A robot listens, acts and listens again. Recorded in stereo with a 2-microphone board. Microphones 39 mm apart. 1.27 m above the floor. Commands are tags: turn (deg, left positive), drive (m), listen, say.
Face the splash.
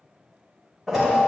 <turn deg="30"/>
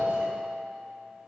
<listen/>
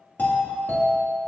<say>I heard a splash, but can't make it out now. It was about 30° right or 150° left.</say>